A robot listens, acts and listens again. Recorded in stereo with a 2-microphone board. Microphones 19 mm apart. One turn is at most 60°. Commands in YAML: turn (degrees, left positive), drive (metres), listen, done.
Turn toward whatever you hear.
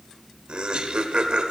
turn: -60
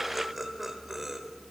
turn: -10
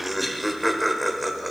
done: "Facing the laughter, 1 to 2 m away."